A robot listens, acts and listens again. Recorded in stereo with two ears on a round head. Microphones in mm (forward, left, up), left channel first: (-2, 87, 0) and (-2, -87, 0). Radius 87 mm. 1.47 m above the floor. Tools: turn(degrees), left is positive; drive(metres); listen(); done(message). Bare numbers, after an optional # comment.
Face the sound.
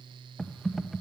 turn(30)
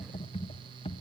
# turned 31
# So it is at 150° left.
turn(150)
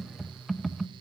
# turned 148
done("Found it: typing on a keyboard, straight ahead.")